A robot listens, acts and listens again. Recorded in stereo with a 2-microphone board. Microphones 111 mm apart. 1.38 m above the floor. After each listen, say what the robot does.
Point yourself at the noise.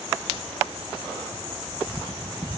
Keep listening.
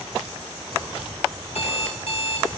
Turn 70° left.
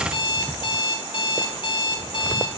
Turn 40° left.
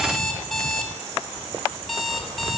Found it: an alarm clock, straight ahead, over 4 m away.